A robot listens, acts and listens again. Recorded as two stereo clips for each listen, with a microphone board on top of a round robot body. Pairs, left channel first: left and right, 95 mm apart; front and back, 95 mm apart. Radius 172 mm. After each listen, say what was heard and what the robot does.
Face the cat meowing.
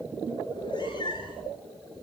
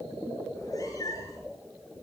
The cat meowing: 55° left. Turn 55° left.
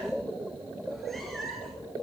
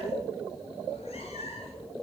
Facing the cat meowing.